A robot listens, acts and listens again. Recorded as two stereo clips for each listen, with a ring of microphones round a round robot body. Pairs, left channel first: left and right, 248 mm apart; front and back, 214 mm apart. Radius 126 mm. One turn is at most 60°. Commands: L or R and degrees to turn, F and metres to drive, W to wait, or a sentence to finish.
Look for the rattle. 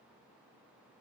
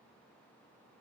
W
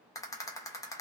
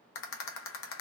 L15
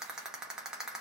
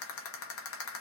Facing the rattle, under 1 m away.